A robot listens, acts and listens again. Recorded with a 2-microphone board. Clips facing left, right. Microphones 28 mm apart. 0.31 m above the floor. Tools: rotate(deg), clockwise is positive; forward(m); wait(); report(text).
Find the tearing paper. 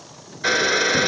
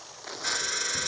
rotate(75)
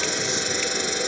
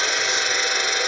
wait()
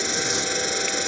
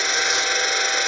wait()
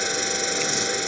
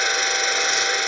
report("I heard tearing paper, but can't make it out now. It was about straight ahead or 30° right.")